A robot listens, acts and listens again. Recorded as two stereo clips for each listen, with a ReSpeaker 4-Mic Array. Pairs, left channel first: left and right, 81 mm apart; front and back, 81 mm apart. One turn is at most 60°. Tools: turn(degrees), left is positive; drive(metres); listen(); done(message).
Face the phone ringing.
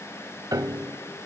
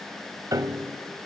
listen()
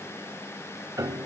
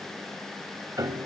listen()
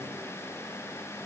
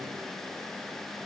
done("I can't make out a phone ringing to turn to.")